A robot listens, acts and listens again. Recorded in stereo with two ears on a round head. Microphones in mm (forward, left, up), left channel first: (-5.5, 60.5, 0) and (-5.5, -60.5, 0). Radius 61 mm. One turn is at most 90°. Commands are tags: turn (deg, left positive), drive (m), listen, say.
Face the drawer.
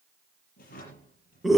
<turn deg="70"/>
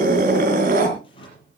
<turn deg="40"/>
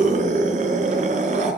<listen/>
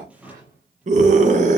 <turn deg="-10"/>
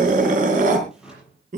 <say>Found it: a drawer, straight ahead, over 4 m away.</say>